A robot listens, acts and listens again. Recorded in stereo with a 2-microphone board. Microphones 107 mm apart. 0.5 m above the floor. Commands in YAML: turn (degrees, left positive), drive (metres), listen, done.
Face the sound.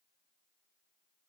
listen: true
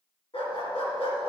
turn: 75
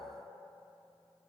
listen: true
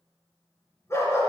turn: 30
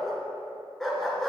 done: "Facing the dog barking, 2 to 4 m away."